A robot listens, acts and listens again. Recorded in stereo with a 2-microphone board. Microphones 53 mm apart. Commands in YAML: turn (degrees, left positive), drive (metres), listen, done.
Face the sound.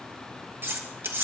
turn: -50
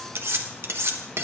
turn: -70
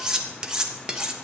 turn: -20
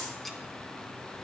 listen: true
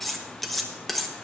done: "Facing the cutlery clinking, 1 to 2 m away."